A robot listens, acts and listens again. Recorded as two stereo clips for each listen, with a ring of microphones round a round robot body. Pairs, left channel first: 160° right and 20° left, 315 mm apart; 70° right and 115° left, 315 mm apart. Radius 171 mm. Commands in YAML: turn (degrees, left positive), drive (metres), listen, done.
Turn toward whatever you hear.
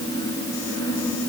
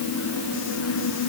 listen: true
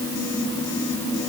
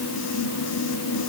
listen: true
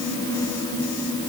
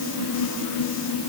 done: "I can't make out anything."